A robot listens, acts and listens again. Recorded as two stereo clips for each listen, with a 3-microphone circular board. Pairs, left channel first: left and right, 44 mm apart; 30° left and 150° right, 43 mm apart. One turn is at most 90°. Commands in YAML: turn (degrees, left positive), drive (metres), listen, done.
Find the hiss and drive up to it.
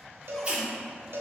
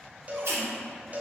turn: -90
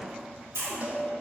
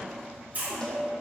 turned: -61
turn: -90
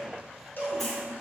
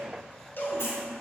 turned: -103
turn: 10
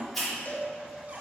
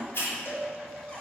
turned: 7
drive: 1.0
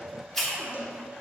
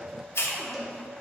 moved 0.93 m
turn: 10
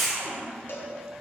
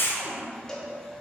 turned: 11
drive: 1.0
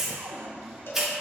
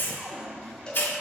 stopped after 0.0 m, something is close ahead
turn: -10
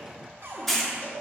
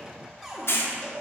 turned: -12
done: "I am next to the hiss."